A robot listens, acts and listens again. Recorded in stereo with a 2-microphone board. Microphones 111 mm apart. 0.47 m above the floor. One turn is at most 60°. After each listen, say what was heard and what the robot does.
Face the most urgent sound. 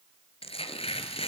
Keep listening.
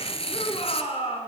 The shout: about 65° left or 115° left. Turn 60° left.
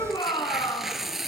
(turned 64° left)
So it is at 45° left. Turn 45° left.
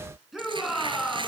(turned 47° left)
Facing the shout.